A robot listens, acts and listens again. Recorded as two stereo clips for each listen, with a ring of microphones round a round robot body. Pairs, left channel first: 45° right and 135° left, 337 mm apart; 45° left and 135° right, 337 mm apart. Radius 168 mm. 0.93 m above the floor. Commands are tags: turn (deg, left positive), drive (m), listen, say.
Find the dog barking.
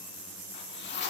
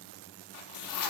<listen/>
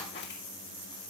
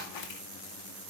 <listen/>
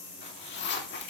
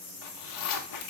<say>I can't make out a dog barking, only a zipper.</say>